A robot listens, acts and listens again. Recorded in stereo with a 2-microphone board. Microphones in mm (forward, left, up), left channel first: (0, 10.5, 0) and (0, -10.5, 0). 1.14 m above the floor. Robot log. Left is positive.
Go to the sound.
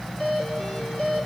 note: The doorbell: about 40° left or 140° left.
cmd yaw +40
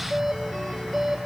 cmd fwd 1.0
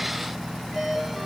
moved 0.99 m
cmd fwd 1.0
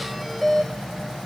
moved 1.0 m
cmd fwd 1.0
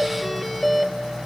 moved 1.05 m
cmd fwd 1.0
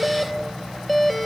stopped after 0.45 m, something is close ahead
end: Arrived at the doorbell, straight ahead.